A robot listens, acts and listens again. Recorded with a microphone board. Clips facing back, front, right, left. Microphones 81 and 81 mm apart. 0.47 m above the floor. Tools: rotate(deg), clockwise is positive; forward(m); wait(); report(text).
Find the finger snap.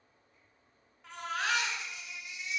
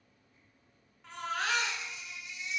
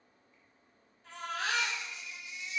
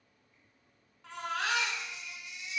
wait()
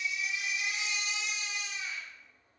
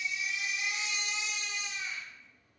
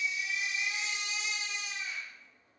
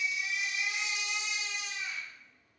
wait()
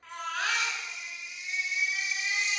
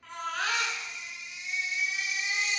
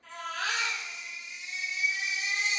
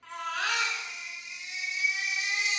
report("I can't make out a finger snap to turn to.")